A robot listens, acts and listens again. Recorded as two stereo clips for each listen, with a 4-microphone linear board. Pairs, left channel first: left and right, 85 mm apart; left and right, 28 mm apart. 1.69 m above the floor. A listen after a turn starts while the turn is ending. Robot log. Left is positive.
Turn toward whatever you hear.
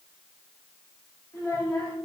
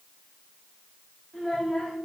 note: The child speaking: about 35° left or 145° left.
cmd yaw +35
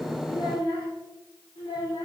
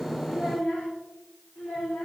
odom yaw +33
note: So it is at 115° left.
cmd yaw +115
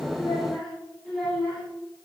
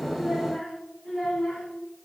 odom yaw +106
end: Found it: a child speaking, straight ahead.